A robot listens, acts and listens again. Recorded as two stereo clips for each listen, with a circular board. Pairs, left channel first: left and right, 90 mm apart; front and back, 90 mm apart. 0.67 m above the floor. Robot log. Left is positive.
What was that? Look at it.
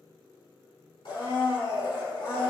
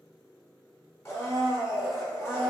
note: The blender: 60° left.
cmd yaw +60
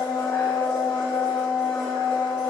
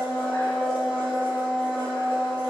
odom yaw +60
note: The blender is now 15° left.
cmd yaw +15
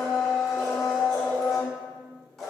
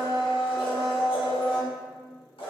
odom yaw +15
end: Found it: a blender, straight ahead, 1 to 2 m away.